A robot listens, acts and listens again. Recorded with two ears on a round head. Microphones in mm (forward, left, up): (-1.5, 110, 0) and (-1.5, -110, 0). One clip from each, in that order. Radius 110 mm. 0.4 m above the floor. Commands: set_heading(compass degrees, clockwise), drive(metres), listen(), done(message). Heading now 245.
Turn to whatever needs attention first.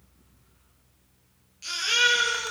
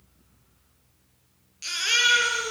set_heading(270)
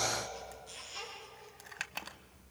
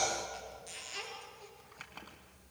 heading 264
set_heading(39)
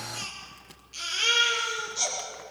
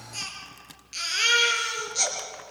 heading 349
set_heading(39)
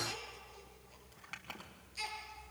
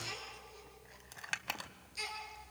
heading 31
done("Found it: a baby crying, straight ahead.")